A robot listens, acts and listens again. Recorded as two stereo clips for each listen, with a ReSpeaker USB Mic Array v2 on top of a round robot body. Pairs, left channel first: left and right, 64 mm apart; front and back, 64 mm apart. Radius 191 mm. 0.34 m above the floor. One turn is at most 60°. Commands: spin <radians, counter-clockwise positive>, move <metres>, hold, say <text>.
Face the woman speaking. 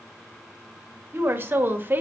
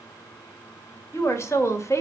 spin -0.61
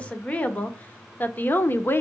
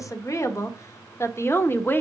spin 0.79
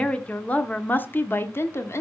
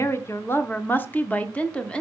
spin 1.05
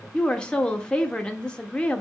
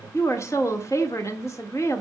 spin 0.35
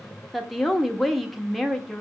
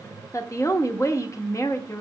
say Facing the woman speaking.